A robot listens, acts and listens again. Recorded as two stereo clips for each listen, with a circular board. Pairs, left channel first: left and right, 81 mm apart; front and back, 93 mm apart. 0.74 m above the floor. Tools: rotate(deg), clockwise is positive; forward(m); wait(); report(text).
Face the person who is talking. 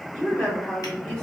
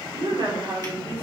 rotate(-165)
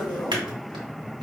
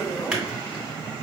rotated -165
wait()
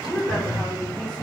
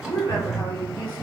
rotate(-10)
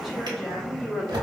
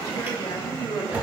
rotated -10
report("Found it: a woman speaking, straight ahead.")